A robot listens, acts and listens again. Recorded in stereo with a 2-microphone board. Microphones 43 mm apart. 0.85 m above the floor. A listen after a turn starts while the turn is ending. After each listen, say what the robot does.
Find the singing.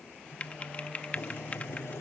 Turn 45° right.
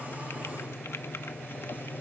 Turn 80° right.
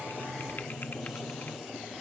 Turn 20° right.
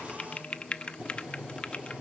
Keep listening.
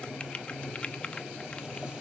Found it: singing, straight ahead.